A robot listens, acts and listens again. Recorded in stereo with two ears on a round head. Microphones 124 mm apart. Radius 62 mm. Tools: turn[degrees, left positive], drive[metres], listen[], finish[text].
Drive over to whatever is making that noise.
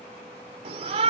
Thought: The shout: about 50° right or 130° right.
Action: turn[-50]
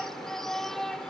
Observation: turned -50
Action: drive[1.0]
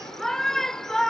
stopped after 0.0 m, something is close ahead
Action: finish[Blocked. The shout is further on, straight ahead.]